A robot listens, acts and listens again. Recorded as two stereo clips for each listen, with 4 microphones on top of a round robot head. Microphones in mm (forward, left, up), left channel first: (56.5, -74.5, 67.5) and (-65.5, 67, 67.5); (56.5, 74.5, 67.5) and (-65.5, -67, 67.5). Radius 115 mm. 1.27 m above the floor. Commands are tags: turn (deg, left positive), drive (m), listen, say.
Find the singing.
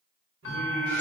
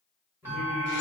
<turn deg="150"/>
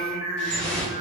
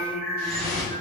<say>Facing the singing.</say>